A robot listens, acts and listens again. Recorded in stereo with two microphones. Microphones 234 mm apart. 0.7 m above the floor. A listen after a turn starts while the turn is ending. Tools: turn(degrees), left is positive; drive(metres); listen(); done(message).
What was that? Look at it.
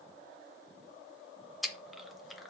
turn(degrees=30)
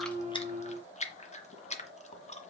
turn(degrees=150)
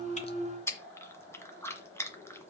turn(degrees=10)
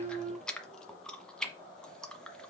done("Found it: chewing, straight ahead.")